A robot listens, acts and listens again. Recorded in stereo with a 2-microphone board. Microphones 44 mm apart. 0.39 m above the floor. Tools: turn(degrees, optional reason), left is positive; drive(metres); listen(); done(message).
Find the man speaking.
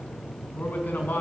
turn(degrees=45, reason="The man speaking: about 45° left or 135° left.")
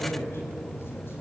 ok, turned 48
turn(degrees=70, reason="So it is at 70° left.")
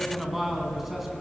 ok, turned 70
done("Facing the man speaking.")